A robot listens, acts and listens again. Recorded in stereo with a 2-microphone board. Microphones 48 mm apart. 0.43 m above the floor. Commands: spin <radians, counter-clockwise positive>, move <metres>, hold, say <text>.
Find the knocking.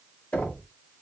spin 0.52
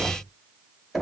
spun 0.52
say Found it: knocking, straight ahead, 1 to 2 m away.